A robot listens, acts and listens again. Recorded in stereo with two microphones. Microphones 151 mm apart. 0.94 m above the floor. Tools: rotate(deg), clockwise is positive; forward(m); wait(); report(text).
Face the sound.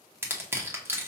rotate(15)
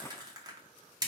rotate(155)
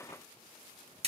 rotate(50)
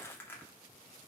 wait()
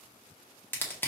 rotate(-15)
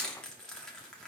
report("Facing the crushing.")